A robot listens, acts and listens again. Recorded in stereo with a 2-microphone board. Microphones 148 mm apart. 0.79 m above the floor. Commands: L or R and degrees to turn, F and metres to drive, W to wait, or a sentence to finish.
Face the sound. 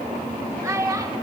R20
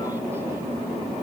W
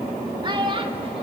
R35
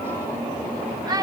R25
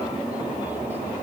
W
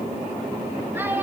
R30
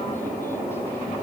W
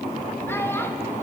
W
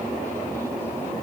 I heard a child speaking, but can't make it out now. It was about 15° left or 135° right.